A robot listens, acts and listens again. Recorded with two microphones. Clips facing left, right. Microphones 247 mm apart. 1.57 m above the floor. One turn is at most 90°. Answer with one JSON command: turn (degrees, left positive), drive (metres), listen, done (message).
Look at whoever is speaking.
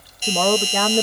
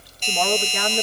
{"turn": 55}
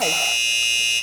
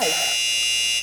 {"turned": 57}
{"listen": true}
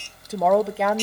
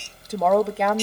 {"done": "Found it: a woman speaking, straight ahead."}